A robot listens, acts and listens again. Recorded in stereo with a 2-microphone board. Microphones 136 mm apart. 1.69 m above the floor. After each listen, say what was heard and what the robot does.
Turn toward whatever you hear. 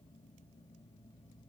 Keep listening.
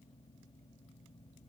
Keep listening.
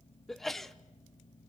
Turn 30° left.
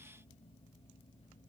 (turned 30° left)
Keep listening.
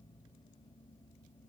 I heard a sneeze, but can't make it out now. It was about 30° right or 150° left.